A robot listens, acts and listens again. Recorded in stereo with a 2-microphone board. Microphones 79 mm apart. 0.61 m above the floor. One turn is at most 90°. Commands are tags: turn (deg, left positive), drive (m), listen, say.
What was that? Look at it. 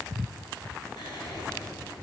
<turn deg="90"/>
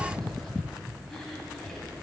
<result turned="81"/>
<say>Found it: whispering, straight ahead.</say>